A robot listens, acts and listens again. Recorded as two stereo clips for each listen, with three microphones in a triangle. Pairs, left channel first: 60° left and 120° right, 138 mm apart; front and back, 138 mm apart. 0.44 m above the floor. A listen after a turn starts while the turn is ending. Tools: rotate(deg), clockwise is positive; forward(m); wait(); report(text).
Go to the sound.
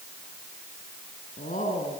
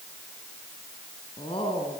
rotate(-45)
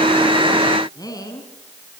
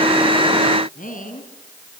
forward(1.0)
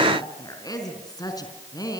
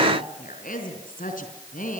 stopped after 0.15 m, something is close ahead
report("Something is in my way. I am facing the woman speaking but have not reached it.")